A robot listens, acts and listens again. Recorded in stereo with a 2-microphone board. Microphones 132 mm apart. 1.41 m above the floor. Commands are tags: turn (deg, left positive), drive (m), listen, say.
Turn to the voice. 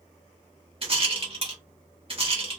<listen/>
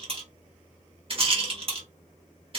<listen/>
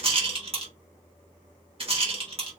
<say>I can't make out anyone speaking to turn to.</say>